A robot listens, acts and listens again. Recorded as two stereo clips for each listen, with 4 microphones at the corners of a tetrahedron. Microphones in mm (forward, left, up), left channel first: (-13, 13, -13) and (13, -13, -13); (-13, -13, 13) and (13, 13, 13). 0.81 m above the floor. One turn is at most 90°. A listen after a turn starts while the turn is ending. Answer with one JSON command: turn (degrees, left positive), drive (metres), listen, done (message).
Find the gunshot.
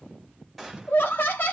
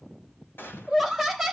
{"turn": -90}
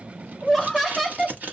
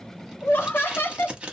{"turn": -45}
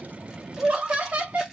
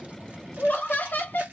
{"done": "I heard a gunshot from this way, but can't make it out now."}